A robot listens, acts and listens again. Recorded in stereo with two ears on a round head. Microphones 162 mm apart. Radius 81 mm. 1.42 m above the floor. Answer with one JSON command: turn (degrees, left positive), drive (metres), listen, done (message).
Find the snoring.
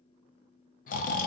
{"turn": 50}
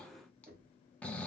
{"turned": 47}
{"turn": 10}
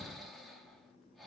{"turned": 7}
{"done": "Found it: snoring, straight ahead."}